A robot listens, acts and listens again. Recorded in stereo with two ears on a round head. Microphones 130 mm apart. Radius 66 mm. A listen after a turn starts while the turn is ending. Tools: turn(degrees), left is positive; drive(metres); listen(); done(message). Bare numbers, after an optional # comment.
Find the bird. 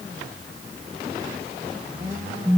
listen()
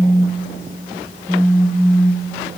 listen()
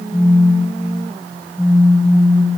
done("I can't make out a bird, only a phone buzzing.")